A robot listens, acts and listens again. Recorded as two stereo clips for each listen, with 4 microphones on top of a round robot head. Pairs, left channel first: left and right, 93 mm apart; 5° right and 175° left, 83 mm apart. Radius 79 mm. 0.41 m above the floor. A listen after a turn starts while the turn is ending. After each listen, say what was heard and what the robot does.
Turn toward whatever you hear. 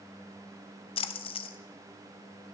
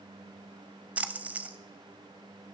The splash: 105° left. Turn 105° left.
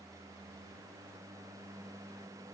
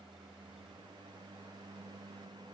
Facing where the splash came from. I can't hear it now.